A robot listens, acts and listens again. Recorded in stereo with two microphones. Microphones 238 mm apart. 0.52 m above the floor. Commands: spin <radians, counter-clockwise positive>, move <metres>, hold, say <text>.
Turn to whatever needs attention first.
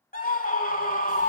spin 0.61
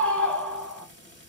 say Found it: a scream, straight ahead.